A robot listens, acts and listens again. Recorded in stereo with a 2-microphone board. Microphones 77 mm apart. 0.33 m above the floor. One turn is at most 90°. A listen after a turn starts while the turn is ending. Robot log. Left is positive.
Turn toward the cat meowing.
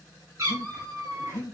note: The cat meowing: about 35° right or 145° right.
cmd yaw -35
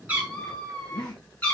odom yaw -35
note: So it is at 20° left.
cmd yaw +20
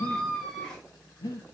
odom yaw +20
note: The cat meowing is now 10° left.
cmd yaw +10
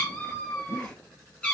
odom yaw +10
note: The cat meowing is now 15° left.
cmd yaw +15
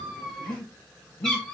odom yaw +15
end: Found it: a cat meowing, straight ahead.